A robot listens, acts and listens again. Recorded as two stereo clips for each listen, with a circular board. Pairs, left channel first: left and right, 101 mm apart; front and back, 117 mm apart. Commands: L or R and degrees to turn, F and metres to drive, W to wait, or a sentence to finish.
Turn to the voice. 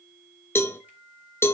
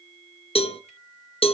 W
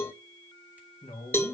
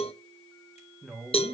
L85
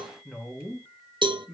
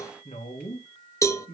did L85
Found it: a woman speaking, straight ahead, 2 to 4 m away.